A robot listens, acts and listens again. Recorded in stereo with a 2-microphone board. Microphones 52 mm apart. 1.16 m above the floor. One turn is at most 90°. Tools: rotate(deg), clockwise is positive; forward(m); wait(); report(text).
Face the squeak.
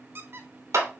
rotate(50)
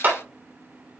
wait()
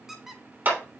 report("Found it: a squeak, straight ahead.")